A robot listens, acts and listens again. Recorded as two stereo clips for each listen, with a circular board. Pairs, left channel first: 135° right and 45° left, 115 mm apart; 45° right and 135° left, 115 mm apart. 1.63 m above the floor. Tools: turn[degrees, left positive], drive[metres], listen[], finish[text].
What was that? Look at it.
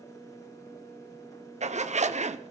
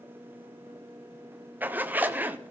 Thought: The zipper: 60° left.
Action: turn[60]
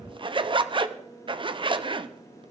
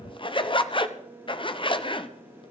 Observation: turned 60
Action: finish[Facing the zipper.]